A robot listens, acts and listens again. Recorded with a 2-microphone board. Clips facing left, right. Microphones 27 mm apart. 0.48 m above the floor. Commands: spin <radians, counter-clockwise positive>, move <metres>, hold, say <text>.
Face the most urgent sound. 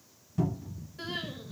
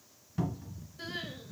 spin 1.57
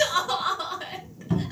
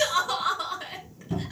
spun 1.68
say Found it: crying, straight ahead.